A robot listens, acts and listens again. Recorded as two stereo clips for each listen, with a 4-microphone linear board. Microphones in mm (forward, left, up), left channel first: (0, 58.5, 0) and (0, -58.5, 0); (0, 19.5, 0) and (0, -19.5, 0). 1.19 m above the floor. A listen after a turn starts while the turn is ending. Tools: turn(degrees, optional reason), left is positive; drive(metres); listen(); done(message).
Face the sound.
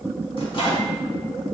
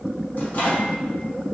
turn(degrees=45, reason="The microwave: about 45° left or 135° left.")
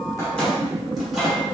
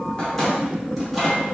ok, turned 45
done("Facing the microwave.")